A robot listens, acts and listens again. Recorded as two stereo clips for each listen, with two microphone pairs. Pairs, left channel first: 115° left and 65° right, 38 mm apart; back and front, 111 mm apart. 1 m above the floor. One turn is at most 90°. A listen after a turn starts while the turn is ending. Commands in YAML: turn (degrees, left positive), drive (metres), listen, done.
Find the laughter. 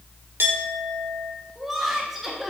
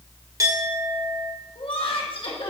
turn: -90
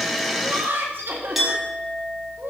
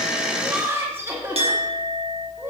turn: -70
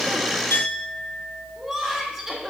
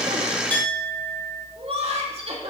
turn: 15
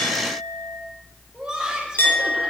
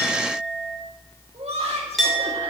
done: "Facing the laughter."